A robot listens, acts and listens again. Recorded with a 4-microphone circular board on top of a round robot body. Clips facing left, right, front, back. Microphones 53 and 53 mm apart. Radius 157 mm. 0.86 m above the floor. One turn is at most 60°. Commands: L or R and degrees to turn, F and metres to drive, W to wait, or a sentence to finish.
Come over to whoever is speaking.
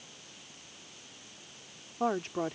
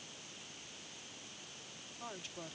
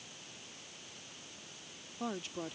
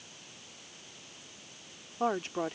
L60
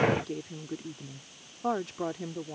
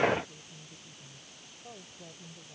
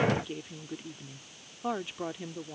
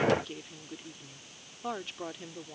L60
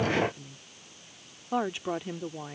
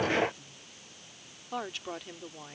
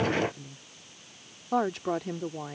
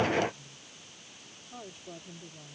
L15
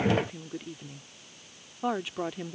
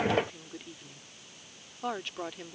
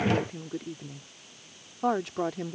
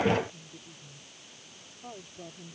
L10
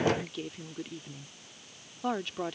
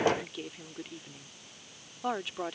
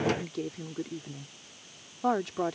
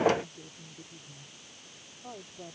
F1.0
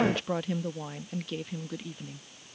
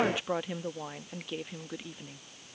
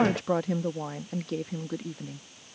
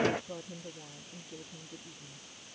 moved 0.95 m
R10
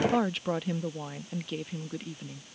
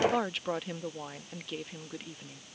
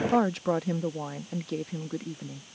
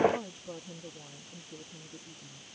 F1.0
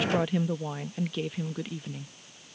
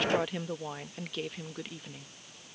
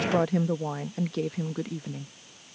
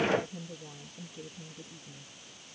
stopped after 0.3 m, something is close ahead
Arrived at the woman speaking, straight ahead.